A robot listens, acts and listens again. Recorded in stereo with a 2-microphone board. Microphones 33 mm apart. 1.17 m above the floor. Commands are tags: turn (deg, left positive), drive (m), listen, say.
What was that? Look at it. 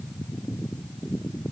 <listen/>
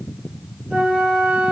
<turn deg="-30"/>
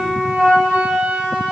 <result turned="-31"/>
<turn deg="-120"/>
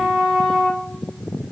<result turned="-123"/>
<say>Found it: a flute, straight ahead, 2 to 4 m away.</say>